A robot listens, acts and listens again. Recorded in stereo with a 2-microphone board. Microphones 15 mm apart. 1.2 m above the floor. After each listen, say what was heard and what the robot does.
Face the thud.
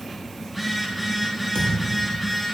Turn 90° left.
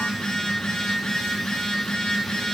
I heard a thud from this way, but can't make it out now.